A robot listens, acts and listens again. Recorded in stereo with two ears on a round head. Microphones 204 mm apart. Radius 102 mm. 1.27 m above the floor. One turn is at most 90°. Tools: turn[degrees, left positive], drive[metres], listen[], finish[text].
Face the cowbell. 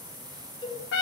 Thought: The cowbell: about 20° left or 160° left.
Action: turn[20]
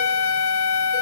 Action: listen[]
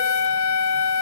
Action: listen[]
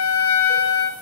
Action: finish[I heard a cowbell, but can't make it out now. It was about straight ahead or 140° left.]